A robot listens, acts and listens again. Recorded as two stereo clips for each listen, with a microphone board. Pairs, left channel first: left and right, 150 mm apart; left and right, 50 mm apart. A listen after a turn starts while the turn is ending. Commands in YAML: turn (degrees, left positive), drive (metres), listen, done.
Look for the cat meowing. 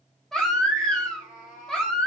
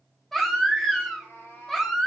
turn: 70
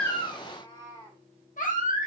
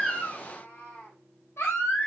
turn: 30
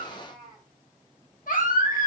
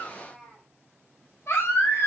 done: "Facing the cat meowing, 2 to 4 m away."